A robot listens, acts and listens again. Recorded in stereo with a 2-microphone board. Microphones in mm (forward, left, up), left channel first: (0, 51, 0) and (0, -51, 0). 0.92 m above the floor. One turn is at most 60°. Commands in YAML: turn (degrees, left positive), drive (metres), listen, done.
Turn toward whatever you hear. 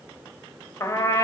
turn: 25
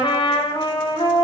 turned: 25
turn: 60
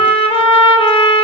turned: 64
turn: 60
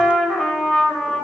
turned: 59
done: "Found it: a trumpet, straight ahead."